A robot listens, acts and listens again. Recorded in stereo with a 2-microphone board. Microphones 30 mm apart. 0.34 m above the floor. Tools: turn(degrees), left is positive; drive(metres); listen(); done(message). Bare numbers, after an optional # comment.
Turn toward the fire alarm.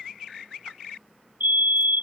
# The fire alarm: about 75° right or 105° right.
turn(-75)
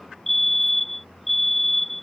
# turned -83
done("Found it: a fire alarm, straight ahead.")